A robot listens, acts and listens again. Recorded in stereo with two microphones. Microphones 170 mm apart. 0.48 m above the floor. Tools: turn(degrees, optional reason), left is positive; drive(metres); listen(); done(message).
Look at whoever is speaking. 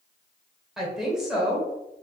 turn(degrees=30)
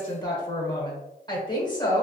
turn(degrees=150, reason="So it is at 150° left.")
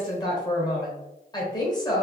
turn(degrees=30, reason="The woman speaking is now 30° left.")
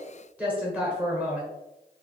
turn(degrees=-10, reason="The woman speaking is now 10° right.")
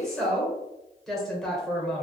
done("Facing the woman speaking.")